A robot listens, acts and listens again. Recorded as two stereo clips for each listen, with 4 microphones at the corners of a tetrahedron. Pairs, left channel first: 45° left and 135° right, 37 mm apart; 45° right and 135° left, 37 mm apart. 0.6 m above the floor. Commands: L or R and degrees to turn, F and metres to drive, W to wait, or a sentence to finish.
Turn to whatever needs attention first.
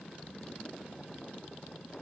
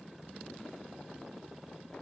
W
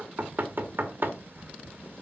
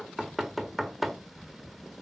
W
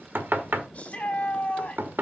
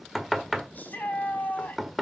Facing the shout, over 4 m away.